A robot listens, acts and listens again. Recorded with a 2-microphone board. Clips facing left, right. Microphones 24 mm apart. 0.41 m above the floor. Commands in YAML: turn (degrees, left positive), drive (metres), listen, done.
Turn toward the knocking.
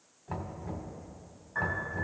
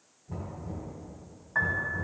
turn: 70
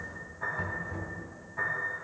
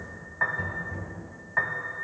turn: 15
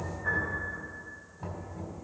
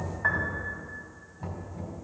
done: "Found it: knocking, straight ahead, 1 to 2 m away."